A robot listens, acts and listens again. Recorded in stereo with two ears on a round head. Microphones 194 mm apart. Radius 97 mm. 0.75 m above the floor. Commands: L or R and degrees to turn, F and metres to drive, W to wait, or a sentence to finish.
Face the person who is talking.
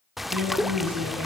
R90
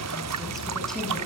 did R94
W
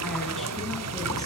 W
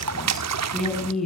Facing the woman speaking, over 4 m away.